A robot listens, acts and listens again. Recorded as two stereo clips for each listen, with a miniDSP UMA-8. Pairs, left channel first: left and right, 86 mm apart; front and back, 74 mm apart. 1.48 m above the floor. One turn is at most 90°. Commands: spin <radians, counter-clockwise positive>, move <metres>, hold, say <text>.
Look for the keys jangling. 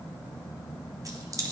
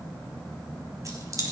spin -1.57
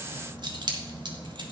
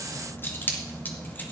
spin -1.13
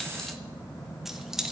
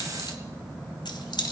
say Facing the keys jangling, 1 to 2 m away.